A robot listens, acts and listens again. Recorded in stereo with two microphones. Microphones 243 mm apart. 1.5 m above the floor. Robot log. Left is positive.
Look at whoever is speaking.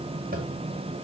cmd idle
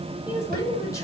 cmd yaw +30
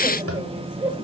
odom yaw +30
note: So it is at 15° right.
cmd yaw -15
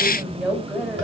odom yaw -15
end: Facing the woman speaking, over 4 m away.